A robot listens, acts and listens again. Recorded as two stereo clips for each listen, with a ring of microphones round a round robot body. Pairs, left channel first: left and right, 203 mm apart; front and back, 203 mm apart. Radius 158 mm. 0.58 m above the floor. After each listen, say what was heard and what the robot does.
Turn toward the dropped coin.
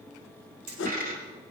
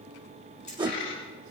The dropped coin: 45° right. Turn 45° right.
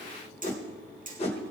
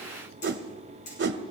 Facing where the dropped coin came from. I can't hear it now.